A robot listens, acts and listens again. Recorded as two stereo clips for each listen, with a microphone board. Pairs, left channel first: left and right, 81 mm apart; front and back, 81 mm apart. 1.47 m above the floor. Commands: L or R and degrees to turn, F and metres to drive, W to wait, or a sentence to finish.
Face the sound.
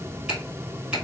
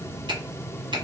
R170
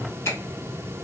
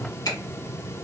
L35
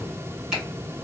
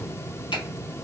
R10
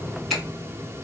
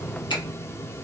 Facing the finger snap.